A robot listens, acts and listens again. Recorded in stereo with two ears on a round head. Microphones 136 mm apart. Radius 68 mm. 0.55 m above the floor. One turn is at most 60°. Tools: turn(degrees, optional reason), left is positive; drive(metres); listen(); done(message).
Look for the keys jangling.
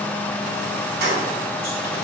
turn(degrees=-60)
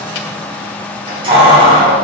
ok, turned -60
turn(degrees=-40, reason="So it is at 40° right.")
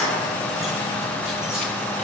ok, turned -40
listen()
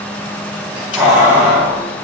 turn(degrees=-10, reason="The keys jangling is now 10° right.")
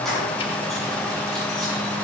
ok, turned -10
listen()
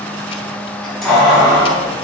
done("Found it: keys jangling, straight ahead, 2 to 4 m away.")